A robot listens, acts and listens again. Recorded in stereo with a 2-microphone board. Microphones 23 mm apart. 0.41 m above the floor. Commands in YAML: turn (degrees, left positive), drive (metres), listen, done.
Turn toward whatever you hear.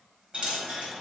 turn: -55
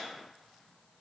listen: true
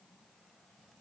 done: "I heard a dropped coin, but can't make it out now. It was about straight ahead or 70° right."